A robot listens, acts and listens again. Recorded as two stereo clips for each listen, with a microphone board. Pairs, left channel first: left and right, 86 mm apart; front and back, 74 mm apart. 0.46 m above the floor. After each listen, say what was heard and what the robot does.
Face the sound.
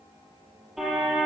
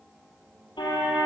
Found it: a car horn, straight ahead, over 4 m away.